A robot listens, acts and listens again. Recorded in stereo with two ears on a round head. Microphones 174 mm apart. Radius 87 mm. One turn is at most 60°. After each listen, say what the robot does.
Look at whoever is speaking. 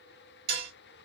Keep listening.
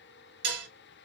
Keep listening.
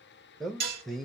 Turn 30° left.
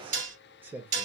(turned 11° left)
Turn 10° right.
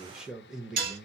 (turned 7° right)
Found it: a man speaking, straight ahead.